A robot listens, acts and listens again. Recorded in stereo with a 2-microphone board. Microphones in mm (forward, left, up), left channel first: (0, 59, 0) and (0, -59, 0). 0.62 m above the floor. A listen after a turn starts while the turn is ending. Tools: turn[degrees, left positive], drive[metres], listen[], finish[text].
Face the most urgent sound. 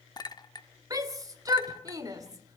Thought: The shout: about 30° right or 150° right.
Action: turn[-30]
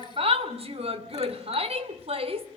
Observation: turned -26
Thought: So it is at 125° right.
Action: turn[-125]
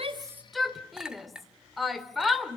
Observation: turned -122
Action: finish[Found it: a shout, straight ahead, 1 to 2 m away.]